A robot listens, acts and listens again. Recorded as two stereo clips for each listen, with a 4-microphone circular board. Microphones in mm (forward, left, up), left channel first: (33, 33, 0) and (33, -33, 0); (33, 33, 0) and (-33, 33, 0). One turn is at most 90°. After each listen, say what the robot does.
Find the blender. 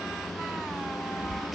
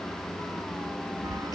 Keep listening.
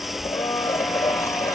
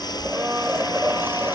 Turn 90° left.
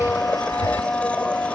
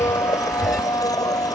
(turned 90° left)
Turn 20° left.
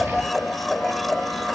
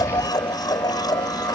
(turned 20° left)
Found it: a blender, straight ahead.